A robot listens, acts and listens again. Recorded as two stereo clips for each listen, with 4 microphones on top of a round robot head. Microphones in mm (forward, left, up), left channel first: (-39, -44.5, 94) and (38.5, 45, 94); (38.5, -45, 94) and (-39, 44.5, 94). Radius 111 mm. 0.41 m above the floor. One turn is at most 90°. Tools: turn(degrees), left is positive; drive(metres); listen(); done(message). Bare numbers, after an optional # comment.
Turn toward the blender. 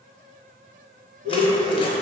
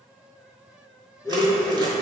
# The blender: 20° left.
turn(20)
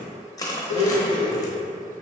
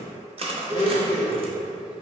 done("Found it: a blender, straight ahead, 1 to 2 m away.")